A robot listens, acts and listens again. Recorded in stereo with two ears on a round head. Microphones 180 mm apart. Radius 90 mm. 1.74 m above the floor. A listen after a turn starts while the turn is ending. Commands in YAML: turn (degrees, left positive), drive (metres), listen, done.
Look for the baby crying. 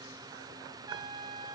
listen: true
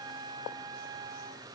listen: true
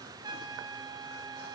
done: "I can't make out a baby crying, only a trumpet."